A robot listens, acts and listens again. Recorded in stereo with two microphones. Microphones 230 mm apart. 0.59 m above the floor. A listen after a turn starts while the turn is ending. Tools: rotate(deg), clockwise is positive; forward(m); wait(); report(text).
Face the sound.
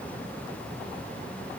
wait()
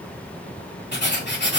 rotate(-50)
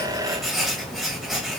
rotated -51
report("Facing the writing.")